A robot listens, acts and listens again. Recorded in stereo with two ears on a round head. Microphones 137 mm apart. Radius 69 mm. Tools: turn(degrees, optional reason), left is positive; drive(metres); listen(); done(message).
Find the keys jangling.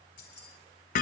turn(degrees=65, reason="The keys jangling: about 65° left or 115° left.")
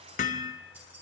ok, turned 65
turn(degrees=-10, reason="So it is at 10° right.")
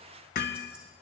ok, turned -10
listen()
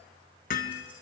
listen()
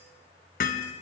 done("Facing where the keys jangling came from. I can't hear it now.")